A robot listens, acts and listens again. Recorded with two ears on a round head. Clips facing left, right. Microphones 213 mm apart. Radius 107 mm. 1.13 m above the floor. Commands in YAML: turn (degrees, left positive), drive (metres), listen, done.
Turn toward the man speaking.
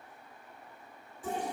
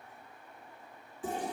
listen: true
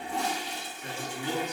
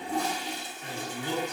turn: -30
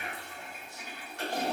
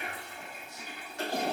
listen: true
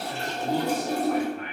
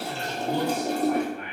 turn: -115
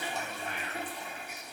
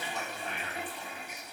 done: "Facing the man speaking, 1 to 2 m away."